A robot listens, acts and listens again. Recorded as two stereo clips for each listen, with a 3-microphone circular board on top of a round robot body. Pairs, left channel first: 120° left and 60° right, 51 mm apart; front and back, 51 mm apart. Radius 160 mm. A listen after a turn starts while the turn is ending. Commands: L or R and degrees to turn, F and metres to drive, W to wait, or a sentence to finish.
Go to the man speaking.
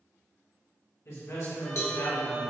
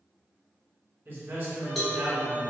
L130
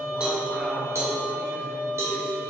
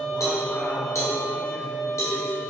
W
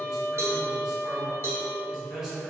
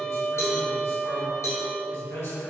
L10
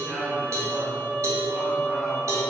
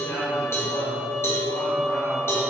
W
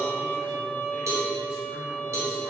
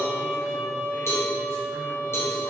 W
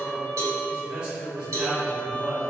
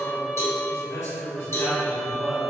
F1.0
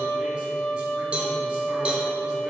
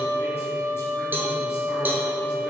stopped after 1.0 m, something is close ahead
W
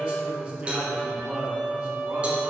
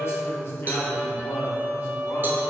R10
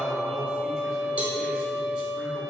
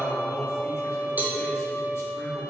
W
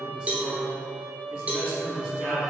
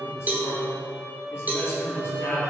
Arrived at the man speaking, straight ahead.